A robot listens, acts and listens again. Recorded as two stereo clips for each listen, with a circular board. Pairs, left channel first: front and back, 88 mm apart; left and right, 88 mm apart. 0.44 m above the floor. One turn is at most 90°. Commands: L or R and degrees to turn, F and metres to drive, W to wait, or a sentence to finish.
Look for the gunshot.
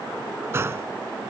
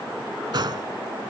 R90
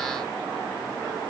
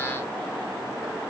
R30
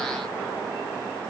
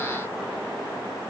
Facing where the gunshot came from. I can't hear it now.